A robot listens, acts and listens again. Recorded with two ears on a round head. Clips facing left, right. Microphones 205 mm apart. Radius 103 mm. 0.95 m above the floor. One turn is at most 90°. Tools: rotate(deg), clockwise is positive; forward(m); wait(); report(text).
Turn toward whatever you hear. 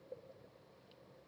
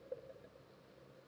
wait()
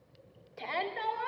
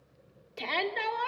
rotate(45)
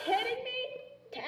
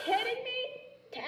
report("Facing the shout.")